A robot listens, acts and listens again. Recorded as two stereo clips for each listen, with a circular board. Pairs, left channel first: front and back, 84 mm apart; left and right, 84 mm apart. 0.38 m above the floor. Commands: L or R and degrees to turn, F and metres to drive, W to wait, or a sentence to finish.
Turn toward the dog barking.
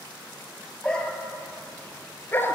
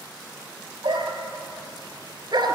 R60
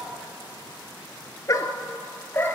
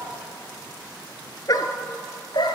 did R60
L65
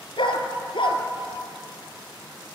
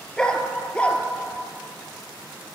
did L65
L15
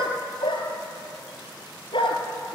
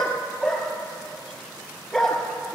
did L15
Found it: a dog barking, straight ahead, 2 to 4 m away.